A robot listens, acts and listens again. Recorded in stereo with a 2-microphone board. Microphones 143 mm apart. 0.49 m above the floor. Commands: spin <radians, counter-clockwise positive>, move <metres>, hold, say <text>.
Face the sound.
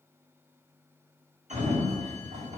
spin -1.05
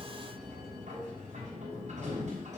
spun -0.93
spin -1.05
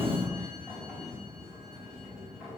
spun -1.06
say Facing the sliding door.